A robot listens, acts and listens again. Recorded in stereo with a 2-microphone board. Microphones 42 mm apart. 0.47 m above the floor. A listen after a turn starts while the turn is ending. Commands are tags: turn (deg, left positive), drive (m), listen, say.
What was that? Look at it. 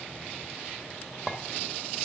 <turn deg="-20"/>
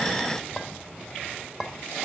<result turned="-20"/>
<say>Facing the clink.</say>